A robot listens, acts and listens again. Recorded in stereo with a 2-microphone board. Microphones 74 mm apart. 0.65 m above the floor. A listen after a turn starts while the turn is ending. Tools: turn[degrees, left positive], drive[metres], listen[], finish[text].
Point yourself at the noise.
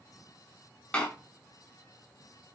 Thought: The door slam: about 15° left or 165° left.
Action: turn[15]
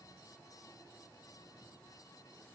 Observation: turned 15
Action: listen[]
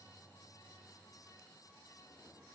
Action: finish[I heard a door slam, but can't make it out now. It was about straight ahead or 150° left.]